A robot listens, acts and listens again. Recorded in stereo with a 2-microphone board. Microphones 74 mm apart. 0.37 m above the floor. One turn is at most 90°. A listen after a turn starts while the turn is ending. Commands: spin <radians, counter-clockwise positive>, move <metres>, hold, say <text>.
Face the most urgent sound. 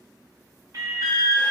spin -0.96
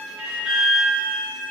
say Facing the alarm, 1 to 2 m away.